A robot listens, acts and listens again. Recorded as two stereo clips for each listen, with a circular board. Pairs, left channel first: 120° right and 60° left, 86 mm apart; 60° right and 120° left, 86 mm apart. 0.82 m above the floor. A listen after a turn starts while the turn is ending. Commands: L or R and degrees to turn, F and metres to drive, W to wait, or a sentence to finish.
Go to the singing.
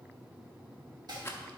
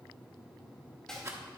W
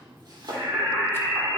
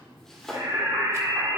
L110
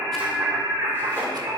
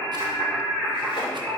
L25
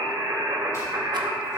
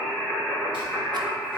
L20
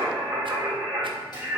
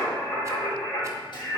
F1.0
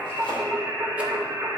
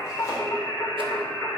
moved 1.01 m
F1.0
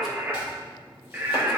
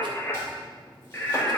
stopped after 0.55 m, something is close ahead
R10
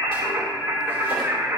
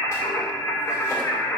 Arrived at the singing, straight ahead.